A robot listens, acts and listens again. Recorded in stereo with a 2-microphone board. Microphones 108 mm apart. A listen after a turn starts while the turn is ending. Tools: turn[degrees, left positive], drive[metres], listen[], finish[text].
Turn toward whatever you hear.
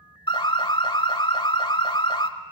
Thought: The alarm: about 55° left or 125° left.
Action: turn[55]
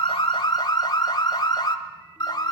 Thought: So it is at 55° left.
Action: turn[55]
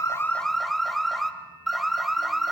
Action: finish[Found it: an alarm, straight ahead, 1 to 2 m away.]